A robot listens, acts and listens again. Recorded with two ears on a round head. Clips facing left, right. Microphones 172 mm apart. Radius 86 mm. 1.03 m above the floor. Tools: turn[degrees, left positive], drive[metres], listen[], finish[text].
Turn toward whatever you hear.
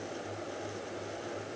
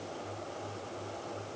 Action: listen[]
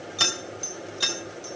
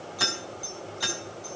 Thought: The keys jangling: about 35° left or 145° left.
Action: turn[35]
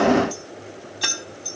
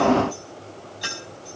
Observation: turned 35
Thought: So it is at 115° left.
Action: turn[115]
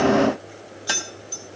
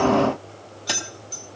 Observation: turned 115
Thought: The keys jangling is now 10° left.
Action: turn[10]
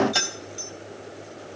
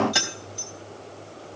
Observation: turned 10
Action: finish[Found it: keys jangling, straight ahead.]